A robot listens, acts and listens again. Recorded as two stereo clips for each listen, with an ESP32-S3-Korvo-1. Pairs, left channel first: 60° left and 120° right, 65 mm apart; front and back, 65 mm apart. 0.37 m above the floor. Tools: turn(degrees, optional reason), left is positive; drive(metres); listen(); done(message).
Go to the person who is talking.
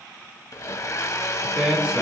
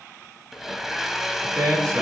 turn(degrees=170, reason="The man speaking: 170° left.")
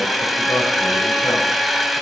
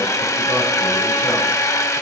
listen()
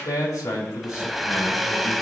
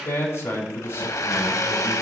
turn(degrees=40, reason="The man speaking is now 40° left.")
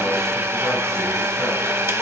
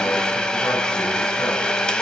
listen()
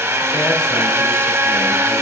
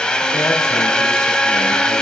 listen()
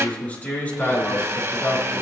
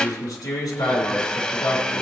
drive(metres=1.0)
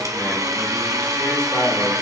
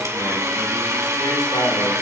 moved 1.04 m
drive(metres=1.0)
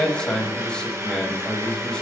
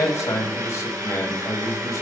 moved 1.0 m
turn(degrees=-10, reason="The man speaking is now 10° right.")
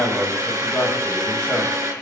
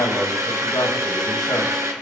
drive(metres=1.0)
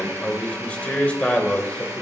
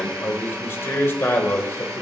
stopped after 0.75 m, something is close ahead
done("I am next to the man speaking.")